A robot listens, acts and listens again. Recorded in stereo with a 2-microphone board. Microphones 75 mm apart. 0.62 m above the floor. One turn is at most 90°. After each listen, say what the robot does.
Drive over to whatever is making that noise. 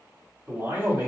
Turn 35° right.
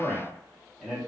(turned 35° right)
Drive 1.0 m forward.
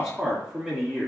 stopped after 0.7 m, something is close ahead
I am next to the man speaking.